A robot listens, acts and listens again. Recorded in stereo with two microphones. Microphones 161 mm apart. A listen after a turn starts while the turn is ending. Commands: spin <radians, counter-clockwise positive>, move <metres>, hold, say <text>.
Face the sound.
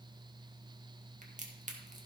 spin -0.87
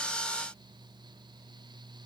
hold
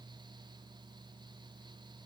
say I heard a crack, but can't make it out now. It was about straight ahead or 80° right.